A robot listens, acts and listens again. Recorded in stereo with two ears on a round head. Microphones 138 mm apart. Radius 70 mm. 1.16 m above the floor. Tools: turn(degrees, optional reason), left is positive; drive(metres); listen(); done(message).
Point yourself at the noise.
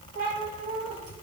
turn(degrees=-60, reason="The cat meowing: about 60° right or 120° right.")
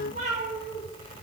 turn(degrees=-60, reason="So it is at 60° right.")
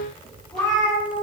done("Found it: a cat meowing, straight ahead.")